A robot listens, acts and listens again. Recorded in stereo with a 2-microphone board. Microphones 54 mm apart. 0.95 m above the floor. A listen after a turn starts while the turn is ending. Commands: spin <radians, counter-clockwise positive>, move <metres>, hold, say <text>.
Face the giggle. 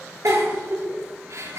spin -1.31
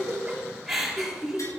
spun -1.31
say Facing the giggle, over 4 m away.